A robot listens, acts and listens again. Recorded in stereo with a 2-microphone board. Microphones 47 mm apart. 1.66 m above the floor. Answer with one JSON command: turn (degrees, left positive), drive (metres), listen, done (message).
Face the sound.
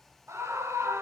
{"turn": -90}
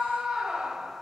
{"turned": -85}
{"turn": -10}
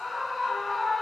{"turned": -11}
{"done": "Found it: a scream, straight ahead, under 1 m away."}